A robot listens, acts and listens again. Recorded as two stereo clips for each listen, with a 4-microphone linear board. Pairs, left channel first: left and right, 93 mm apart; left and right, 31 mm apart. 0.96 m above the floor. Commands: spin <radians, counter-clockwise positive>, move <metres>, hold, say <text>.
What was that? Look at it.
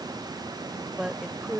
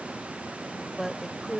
spin -0.52
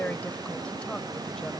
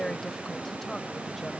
spin 0.26
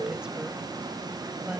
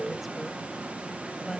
hold
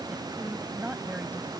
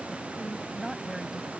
spin -0.26
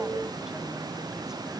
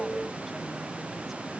hold
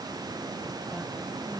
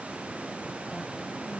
hold
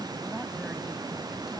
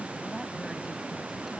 say I heard a woman speaking from this way, but can't make it out now.